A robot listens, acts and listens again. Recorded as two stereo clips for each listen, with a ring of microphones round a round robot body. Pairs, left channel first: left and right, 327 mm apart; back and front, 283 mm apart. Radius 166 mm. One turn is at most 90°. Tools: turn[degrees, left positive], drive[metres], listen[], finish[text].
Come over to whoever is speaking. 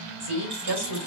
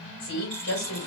Thought: The woman speaking: 135° right.
Action: turn[-90]
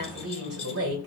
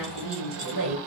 Thought: The woman speaking is now 40° right.
Action: turn[-40]
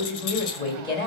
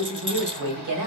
Thought: The woman speaking is now 15° left.
Action: turn[15]
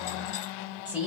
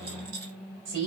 Action: drive[1.0]
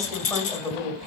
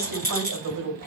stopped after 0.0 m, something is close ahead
Action: finish[Blocked. The woman speaking is further on, straight ahead.]